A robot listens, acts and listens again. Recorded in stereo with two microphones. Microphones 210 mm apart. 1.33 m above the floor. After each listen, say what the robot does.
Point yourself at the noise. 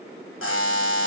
Turn 90° left.
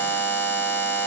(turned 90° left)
Turn 10° left.
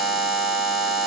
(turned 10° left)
Facing the buzzer, 1 to 2 m away.